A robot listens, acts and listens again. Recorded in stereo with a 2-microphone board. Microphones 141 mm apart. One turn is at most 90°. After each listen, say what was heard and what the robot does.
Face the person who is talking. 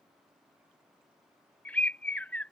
Keep listening.
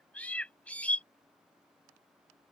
Keep listening.
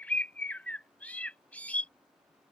I can't make out anyone speaking, only a bird.